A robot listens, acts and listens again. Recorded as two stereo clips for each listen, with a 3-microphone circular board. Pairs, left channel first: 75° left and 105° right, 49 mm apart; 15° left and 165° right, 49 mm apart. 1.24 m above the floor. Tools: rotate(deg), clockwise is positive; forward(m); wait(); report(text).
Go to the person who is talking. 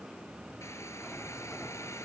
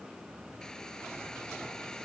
wait()
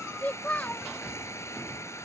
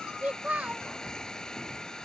rotate(-130)
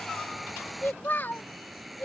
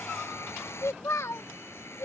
rotate(-30)
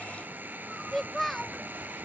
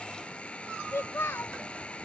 rotate(10)
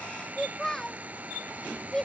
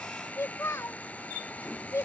forward(1.0)
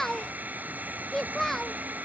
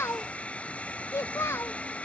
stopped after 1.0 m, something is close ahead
report("Arrived at the child speaking, straight ahead.")